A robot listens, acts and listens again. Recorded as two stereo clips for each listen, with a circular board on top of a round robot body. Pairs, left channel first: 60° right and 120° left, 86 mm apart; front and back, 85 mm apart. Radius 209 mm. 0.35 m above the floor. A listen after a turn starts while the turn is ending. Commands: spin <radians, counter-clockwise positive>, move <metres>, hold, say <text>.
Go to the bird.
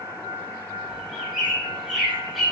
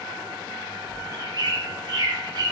spin -2.62
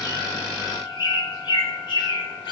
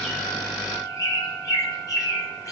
spin -0.79
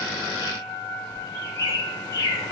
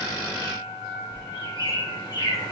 move 1.0
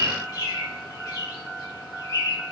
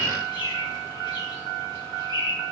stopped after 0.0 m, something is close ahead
spin -0.17
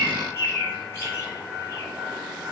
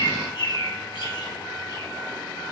say Blocked. The bird is further on, straight ahead.